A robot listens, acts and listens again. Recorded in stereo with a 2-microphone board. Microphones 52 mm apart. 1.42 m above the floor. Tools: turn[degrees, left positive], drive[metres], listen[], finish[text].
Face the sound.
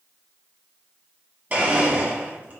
Thought: The blender: about 35° right or 145° right.
Action: turn[-35]
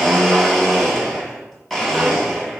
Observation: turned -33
Action: finish[Facing the blender, 1 to 2 m away.]